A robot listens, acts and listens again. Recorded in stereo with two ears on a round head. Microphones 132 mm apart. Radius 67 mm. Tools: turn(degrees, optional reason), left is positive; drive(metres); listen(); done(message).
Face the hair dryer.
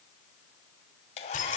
turn(degrees=40, reason="The hair dryer: about 40° left or 140° left.")
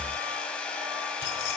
turn(degrees=10, reason="So it is at 10° left.")
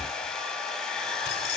done("Facing the hair dryer.")